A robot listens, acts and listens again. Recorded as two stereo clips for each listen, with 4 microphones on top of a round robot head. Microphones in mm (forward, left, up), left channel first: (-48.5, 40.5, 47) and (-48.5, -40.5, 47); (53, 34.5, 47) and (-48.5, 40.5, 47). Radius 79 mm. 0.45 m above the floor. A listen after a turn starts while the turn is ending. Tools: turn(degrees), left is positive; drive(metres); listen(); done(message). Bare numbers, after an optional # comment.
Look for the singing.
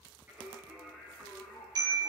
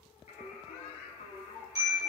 done("Facing the singing.")